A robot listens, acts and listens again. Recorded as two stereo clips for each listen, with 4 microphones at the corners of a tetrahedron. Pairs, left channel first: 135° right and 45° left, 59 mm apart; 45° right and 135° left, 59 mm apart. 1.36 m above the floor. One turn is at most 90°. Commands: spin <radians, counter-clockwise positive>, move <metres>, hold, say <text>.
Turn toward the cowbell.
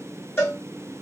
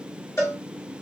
spin -1.48
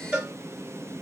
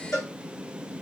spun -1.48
spin -0.35
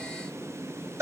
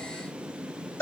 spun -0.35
say Facing the cowbell, 2 to 4 m away.